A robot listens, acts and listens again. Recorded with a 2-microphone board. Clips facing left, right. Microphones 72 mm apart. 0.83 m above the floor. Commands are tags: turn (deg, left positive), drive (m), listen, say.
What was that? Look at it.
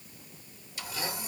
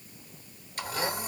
<turn deg="-50"/>
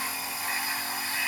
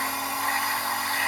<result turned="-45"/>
<turn deg="-80"/>
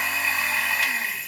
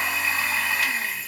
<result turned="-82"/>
<say>Facing the blender.</say>